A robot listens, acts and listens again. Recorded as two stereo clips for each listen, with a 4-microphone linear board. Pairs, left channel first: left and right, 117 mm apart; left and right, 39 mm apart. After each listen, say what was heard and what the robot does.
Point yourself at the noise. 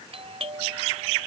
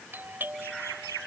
The doorbell: about 55° right or 125° right. Turn 55° right.
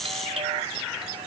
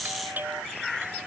So it is at 65° right. Turn 65° right.
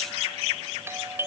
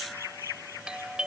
The doorbell is now 20° right. Turn 20° right.
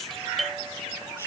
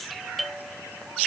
Facing the doorbell.